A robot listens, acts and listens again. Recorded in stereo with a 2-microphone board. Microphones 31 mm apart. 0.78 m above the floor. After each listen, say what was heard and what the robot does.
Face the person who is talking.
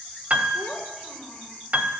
The child speaking: about 35° left or 145° left. Turn 35° left.
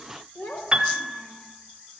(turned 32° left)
So it is at 115° left. Turn 115° left.
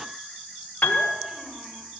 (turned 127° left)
Nothing new. It was at 15° right. Turn 15° right.
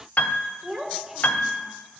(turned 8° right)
Facing the child speaking.